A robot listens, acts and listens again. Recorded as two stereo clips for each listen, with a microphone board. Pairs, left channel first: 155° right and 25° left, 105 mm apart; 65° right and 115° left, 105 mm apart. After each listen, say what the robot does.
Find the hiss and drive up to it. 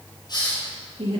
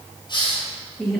Turn 110° right.
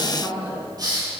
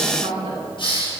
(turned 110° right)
Turn 30° right.
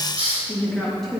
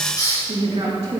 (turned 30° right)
Turn 10° right.
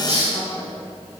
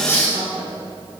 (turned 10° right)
Drive 1.0 m forward.
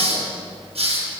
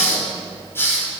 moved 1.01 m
Drive 1.0 m forward.
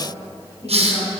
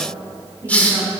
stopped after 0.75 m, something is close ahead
Turn 10° left.
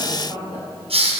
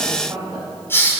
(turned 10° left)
Arrived at the hiss, straight ahead.